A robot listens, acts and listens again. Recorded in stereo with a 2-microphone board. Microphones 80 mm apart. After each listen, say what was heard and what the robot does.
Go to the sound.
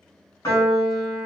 The piano: about 50° left or 130° left. Turn 50° left.
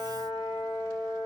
So it is at 75° left. Turn 75° left.
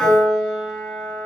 Drive 1.0 m forward.
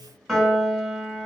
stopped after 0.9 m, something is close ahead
Arrived at the piano, straight ahead.